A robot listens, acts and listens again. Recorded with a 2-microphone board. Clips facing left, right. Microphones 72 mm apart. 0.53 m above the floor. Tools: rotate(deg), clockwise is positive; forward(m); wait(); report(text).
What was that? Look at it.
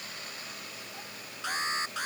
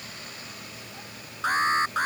rotate(45)
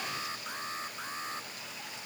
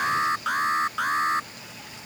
rotate(90)
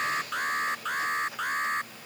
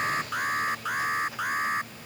report("Facing the alarm.")